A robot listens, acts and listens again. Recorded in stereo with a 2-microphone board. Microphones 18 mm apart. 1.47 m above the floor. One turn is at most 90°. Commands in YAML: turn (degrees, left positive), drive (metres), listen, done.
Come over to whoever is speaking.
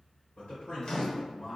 turn: 90
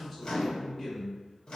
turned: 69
turn: 20
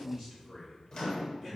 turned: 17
drive: 1.0
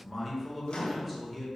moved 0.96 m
drive: 1.0
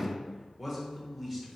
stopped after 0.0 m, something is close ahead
done: "Arrived at the man speaking, straight ahead."